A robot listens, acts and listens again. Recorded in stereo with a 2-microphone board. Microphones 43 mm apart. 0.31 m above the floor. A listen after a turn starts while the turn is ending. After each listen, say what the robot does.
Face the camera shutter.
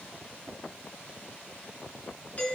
Keep listening.
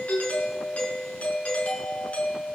Keep listening.
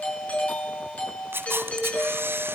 Turn 65° right.
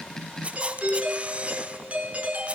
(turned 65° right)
Turn 35° right.
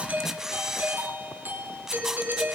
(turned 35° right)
Turn 15° right.
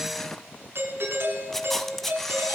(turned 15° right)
Facing the camera shutter.